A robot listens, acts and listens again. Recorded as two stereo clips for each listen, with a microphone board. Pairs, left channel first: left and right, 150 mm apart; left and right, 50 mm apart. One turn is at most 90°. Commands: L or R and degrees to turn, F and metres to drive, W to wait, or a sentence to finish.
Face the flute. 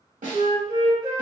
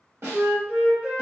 R30
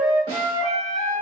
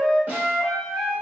Facing the flute, 1 to 2 m away.